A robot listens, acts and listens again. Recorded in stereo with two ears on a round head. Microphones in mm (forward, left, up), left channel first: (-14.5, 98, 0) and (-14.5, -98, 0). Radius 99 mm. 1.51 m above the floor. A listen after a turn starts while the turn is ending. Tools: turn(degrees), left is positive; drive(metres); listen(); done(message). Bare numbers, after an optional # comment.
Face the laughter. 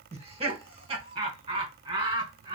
# The laughter: about 20° right or 160° right.
turn(-20)
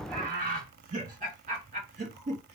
# The laughter: about 35° right or 145° right.
turn(-35)
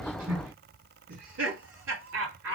# So it is at 115° right.
turn(-115)
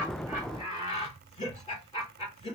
# The laughter is now 25° left.
turn(25)
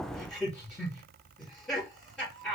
done("Found it: laughter, straight ahead, 2 to 4 m away.")